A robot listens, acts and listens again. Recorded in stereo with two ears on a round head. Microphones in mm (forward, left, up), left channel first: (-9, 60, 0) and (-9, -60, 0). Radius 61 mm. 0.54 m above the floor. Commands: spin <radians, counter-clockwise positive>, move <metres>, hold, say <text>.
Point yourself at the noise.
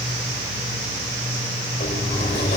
spin 0.87
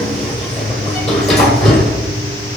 say Facing the sliding door, 2 to 4 m away.